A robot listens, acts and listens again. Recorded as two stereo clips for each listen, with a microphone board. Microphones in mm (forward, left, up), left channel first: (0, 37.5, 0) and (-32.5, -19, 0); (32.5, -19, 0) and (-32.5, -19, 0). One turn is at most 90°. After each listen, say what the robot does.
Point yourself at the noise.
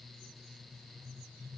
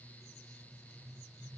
Keep listening.
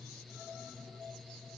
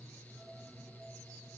Keep listening.
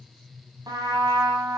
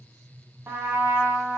Turn 90° right.
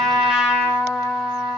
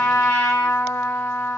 Turn 40° right.
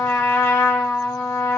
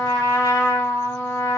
Turn 15° left.
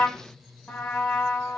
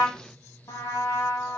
Found it: a trumpet, straight ahead.